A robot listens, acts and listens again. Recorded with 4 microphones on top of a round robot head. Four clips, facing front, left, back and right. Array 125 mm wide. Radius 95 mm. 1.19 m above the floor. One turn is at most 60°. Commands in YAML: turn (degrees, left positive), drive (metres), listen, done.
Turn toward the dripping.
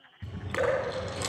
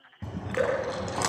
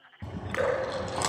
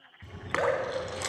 turn: -60
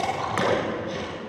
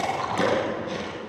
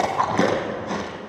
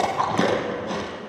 turn: -20
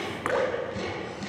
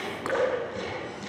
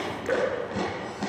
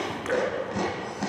turn: 25
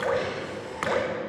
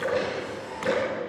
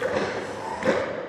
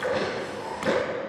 done: "Found it: dripping, straight ahead."